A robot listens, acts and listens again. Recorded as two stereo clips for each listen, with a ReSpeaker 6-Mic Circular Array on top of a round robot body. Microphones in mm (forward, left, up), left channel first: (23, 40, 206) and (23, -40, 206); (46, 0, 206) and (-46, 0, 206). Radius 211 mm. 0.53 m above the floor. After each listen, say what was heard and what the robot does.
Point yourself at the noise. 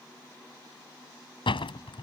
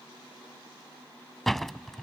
The door slam: 85° left. Turn 85° left.
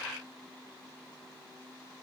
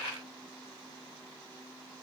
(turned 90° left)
Facing where the door slam came from. I can't hear it now.